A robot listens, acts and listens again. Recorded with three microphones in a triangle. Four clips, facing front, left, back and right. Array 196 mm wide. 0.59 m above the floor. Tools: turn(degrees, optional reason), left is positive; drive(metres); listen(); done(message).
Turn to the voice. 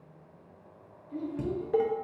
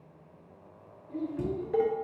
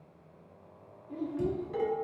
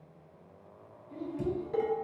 turn(degrees=150, reason="The child speaking: 150° left.")
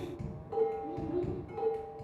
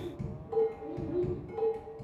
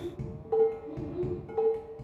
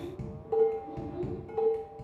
turn(degrees=45, reason="The child speaking is now 45° left.")
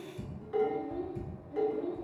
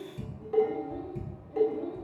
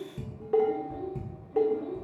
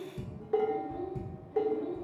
turn(degrees=40, reason="The child speaking is now 40° left.")
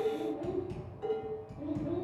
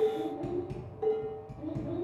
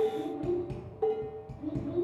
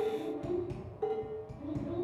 turn(degrees=25, reason="The child speaking is now 25° left.")
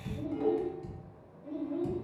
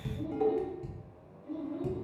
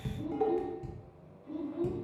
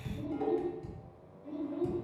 turn(degrees=-10, reason="The child speaking is now 10° right.")
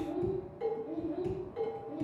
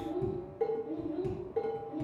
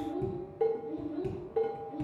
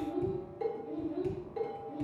done("Facing the child speaking, 1 to 2 m away.")